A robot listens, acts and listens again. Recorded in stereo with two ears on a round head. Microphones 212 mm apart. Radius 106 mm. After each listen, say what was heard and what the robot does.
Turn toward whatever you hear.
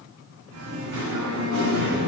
The singing: about 50° right or 130° right. Turn 50° right.
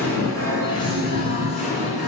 So it is at 35° left. Turn 35° left.
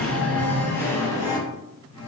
The singing is now 20° left. Turn 20° left.
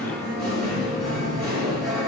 Facing the singing, 2 to 4 m away.